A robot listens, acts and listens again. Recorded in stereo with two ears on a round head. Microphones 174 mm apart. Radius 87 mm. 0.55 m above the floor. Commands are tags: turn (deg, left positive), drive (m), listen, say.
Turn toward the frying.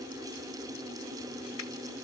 <listen/>
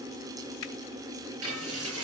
<turn deg="-90"/>
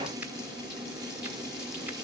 <listen/>
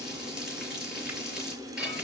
<say>Facing the frying, over 4 m away.</say>